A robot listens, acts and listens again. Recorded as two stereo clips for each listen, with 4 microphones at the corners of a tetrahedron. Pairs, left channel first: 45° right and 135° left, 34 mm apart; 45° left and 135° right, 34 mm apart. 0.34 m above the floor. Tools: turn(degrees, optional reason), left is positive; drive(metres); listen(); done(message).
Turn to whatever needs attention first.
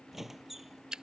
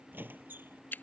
listen()
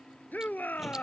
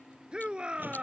turn(degrees=-75, reason="The shout: 75° right.")
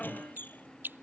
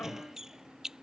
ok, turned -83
turn(degrees=10, reason="Nothing new. It was at 10° left.")
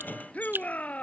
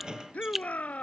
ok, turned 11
done("Found it: a shout, straight ahead.")